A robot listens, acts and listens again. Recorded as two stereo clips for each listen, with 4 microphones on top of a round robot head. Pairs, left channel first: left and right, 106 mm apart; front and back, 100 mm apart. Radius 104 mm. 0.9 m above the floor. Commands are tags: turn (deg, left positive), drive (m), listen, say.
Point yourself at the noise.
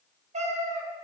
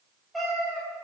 <turn deg="-90"/>
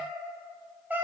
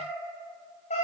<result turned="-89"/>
<turn deg="-15"/>
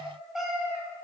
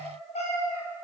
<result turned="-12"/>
<say>Found it: a cat meowing, straight ahead.</say>